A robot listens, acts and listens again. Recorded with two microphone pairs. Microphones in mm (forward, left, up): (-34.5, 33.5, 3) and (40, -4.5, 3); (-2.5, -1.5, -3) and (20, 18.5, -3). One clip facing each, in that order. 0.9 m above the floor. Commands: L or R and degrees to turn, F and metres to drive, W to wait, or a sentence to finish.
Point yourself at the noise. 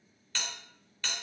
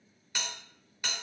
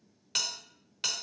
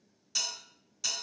R105
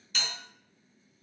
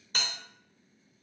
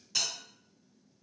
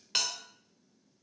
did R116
L15
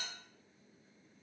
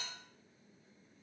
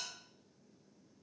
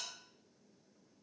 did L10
W
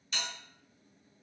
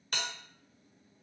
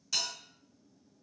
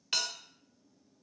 Facing the bell, under 1 m away.